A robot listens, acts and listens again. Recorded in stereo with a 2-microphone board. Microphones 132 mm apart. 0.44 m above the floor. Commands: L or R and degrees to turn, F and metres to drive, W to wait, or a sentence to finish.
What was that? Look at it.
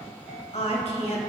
L55
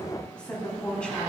L10
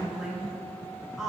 Facing the woman speaking.